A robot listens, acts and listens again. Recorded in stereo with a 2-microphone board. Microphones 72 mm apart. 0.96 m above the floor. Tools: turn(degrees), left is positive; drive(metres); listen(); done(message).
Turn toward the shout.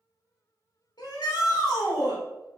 turn(degrees=65)
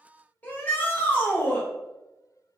turn(degrees=25)
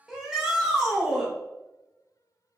done("Facing the shout, 1 to 2 m away.")